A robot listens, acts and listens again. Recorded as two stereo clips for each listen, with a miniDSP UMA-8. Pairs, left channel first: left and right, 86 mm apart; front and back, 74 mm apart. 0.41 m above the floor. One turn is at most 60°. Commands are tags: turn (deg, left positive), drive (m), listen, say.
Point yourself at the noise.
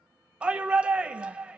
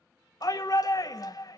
<turn deg="-15"/>
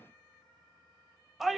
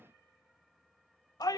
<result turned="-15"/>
<say>Found it: a shout, straight ahead, 1 to 2 m away.</say>